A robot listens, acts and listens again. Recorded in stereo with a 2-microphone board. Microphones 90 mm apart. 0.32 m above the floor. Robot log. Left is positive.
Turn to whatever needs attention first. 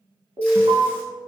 note: The alarm: about 65° right or 115° right.
cmd yaw -65
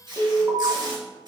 note: So it is at 35° right.
cmd yaw -35
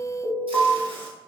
end: Found it: an alarm, straight ahead.